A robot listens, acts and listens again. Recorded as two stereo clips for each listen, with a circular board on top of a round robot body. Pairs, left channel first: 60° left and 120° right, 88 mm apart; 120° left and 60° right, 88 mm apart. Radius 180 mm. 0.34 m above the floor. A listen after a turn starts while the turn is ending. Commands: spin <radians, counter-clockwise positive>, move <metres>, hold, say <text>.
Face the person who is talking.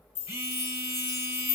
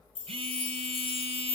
hold
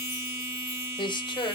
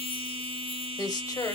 spin 1.40
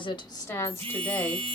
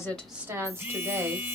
say Found it: a woman speaking, straight ahead, 2 to 4 m away.